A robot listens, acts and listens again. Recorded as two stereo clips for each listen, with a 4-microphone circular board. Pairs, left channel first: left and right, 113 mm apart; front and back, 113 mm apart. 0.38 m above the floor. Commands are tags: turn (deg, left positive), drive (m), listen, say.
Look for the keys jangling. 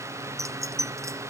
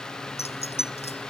<turn deg="-25"/>
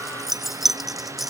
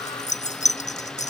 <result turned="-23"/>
<say>Facing the keys jangling.</say>